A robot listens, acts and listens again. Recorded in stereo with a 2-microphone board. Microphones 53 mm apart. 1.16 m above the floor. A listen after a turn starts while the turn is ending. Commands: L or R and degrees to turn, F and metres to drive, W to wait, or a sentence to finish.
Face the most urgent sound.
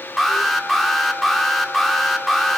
L30
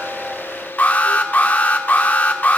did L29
L150
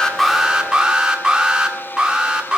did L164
R15
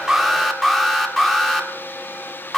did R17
Facing the alarm.